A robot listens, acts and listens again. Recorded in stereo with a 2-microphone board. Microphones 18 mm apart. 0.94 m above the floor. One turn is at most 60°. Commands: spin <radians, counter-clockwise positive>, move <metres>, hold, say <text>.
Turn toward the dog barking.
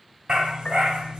spin -1.05
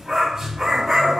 spin -0.44
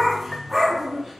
say Facing the dog barking.